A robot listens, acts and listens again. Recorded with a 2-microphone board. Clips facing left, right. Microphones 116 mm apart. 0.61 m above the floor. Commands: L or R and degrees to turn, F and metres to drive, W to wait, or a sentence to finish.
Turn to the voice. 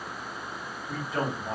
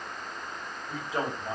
R25
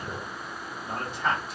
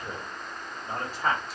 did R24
R130
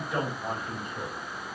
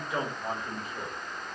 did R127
Facing the man speaking.